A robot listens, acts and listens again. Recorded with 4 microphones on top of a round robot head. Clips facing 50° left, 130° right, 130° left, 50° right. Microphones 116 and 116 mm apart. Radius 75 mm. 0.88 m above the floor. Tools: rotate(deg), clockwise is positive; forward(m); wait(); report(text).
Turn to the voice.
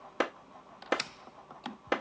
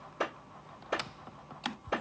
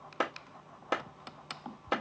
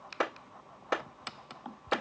wait()
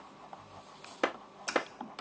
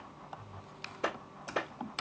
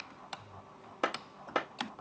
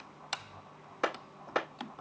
wait()
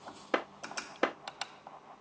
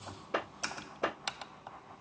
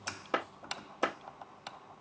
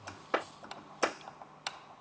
report("I can't make out anyone speaking to turn to.")